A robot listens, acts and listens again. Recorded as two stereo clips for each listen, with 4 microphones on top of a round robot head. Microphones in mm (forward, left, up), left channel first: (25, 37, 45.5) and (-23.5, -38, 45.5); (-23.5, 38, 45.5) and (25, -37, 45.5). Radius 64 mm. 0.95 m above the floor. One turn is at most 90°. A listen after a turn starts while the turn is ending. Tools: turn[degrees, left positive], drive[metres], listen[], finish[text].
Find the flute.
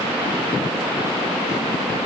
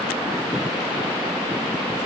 Action: listen[]
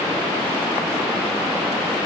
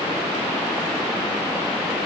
Action: listen[]
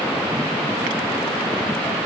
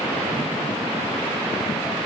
Action: finish[I can't make out a flute.]